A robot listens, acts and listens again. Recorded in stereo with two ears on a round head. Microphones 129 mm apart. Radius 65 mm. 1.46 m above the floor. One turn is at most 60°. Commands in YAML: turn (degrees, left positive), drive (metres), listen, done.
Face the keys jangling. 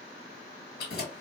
turn: 60
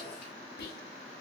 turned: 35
turn: 55
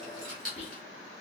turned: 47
done: "Facing the keys jangling, 1 to 2 m away."